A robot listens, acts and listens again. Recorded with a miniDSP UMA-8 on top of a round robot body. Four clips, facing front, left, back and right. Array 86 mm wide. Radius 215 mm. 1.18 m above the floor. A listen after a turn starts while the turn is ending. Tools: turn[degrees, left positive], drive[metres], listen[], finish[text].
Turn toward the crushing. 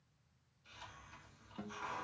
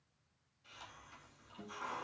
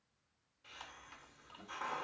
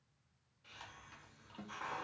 Action: listen[]
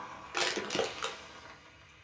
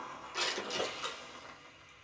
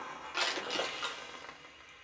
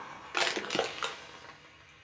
Thought: The crushing: 80° right.
Action: turn[-80]
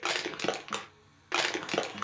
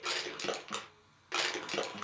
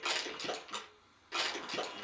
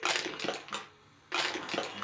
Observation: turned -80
Action: finish[Found it: crushing, straight ahead, under 1 m away.]